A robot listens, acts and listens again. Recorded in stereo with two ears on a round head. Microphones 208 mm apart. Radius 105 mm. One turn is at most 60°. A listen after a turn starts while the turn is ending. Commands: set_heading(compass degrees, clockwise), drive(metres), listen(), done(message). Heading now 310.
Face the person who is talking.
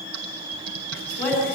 set_heading(280)
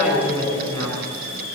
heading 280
set_heading(300)
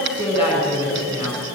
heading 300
set_heading(310)
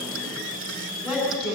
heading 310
done("Facing the woman speaking.")